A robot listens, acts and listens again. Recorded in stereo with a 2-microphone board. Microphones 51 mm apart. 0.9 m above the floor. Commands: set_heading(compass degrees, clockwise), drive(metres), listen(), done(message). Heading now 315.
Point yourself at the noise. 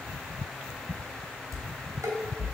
set_heading(45)
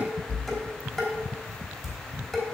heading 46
done("Facing the dishes clattering.")